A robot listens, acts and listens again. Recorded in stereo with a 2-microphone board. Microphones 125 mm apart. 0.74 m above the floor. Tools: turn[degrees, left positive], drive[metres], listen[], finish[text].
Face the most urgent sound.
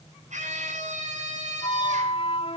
Thought: The scream: about 75° right or 105° right.
Action: turn[-75]
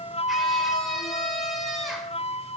Action: finish[Found it: a scream, straight ahead.]